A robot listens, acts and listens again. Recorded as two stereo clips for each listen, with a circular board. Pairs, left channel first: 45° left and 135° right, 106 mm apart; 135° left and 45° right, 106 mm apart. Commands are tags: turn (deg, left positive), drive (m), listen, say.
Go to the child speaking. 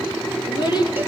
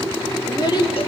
<turn deg="90"/>
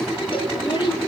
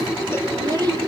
<drive m="1.0"/>
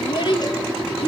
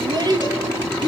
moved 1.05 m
<drive m="1.0"/>
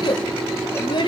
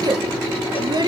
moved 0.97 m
<drive m="1.0"/>
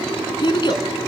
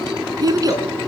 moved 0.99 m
<drive m="1.0"/>
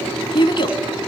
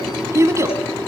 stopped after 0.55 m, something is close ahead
<turn deg="15"/>
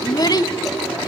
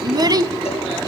<say>I am next to the child speaking.</say>